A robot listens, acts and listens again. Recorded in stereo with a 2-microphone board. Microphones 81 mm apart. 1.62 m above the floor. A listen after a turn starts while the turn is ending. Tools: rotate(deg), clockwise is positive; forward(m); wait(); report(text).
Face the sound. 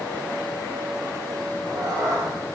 rotate(45)
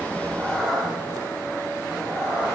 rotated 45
rotate(-35)
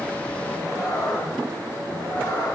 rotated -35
rotate(-35)
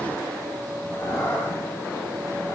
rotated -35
rotate(-30)
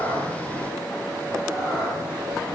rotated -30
report("Found it: a cat meowing, straight ahead, 2 to 4 m away.")